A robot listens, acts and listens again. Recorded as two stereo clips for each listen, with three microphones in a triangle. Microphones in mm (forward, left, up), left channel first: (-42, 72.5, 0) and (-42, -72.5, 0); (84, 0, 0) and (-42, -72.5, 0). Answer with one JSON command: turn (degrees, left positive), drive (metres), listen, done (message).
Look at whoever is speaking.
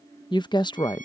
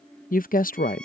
{"turn": 35}
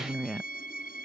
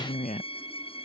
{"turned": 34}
{"done": "Found it: a woman speaking, straight ahead."}